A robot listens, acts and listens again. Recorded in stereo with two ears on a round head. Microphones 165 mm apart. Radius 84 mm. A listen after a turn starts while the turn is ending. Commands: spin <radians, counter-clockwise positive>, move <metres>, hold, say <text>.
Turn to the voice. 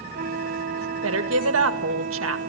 spin -1.57
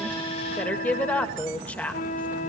spin 0.17
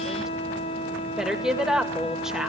say Found it: a woman speaking, straight ahead, 2 to 4 m away.